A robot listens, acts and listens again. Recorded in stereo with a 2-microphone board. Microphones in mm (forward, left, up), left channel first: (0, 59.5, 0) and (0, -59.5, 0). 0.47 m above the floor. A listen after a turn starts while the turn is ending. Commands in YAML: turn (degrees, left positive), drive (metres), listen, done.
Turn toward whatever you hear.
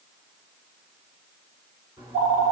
turn: -25
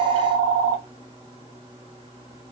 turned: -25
turn: -125
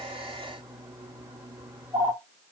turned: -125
turn: -30
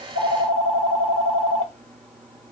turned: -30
turn: 15
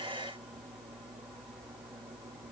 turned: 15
done: "Facing the phone ringing, 1 to 2 m away."